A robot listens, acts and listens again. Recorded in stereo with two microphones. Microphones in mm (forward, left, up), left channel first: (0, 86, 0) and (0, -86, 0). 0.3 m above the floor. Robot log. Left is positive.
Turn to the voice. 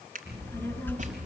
cmd yaw +30
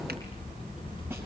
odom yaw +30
note: So it is at 150° left.
cmd yaw +150
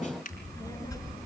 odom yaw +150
note: The child speaking is now 20° left.
cmd yaw +20
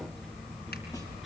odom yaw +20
end: Facing the child speaking.